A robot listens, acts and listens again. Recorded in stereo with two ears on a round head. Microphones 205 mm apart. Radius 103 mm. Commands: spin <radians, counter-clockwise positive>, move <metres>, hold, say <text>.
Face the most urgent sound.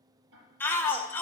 spin 0.52
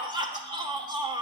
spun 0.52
spin -0.35
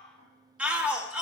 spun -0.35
say Facing the shout.